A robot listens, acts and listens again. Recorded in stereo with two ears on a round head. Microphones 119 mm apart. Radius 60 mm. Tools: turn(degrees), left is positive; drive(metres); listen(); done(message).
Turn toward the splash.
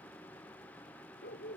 listen()
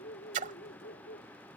turn(degrees=-60)
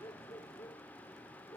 listen()
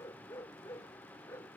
done("I heard a splash, but can't make it out now. It was about straight ahead or 60° right.")